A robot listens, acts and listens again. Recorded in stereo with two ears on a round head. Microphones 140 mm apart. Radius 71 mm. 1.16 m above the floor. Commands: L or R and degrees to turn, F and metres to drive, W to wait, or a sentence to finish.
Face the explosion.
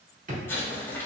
L30
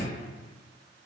W
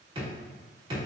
I heard an explosion, but can't make it out now. It was about 15° right or 135° left.